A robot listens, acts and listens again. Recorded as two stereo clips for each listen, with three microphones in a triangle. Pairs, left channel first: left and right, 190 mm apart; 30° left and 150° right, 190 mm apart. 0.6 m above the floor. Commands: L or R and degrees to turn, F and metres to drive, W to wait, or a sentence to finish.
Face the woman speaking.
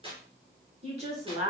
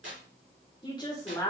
R45
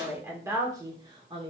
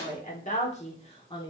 R35
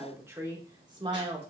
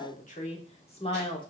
R35
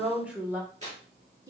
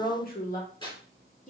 R20
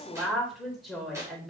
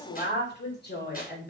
Facing the woman speaking.